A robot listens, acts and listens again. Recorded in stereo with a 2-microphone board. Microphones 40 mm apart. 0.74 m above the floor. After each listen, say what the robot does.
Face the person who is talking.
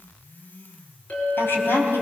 Turn 75° left.
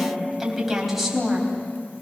Found it: a woman speaking, straight ahead, over 4 m away.